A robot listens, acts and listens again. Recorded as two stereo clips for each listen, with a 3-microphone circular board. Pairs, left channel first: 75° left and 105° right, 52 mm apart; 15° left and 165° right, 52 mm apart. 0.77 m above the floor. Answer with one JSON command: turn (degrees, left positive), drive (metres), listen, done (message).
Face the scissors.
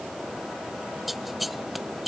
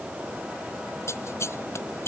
{"turn": -15}
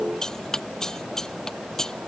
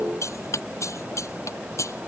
{"done": "Found it: scissors, straight ahead."}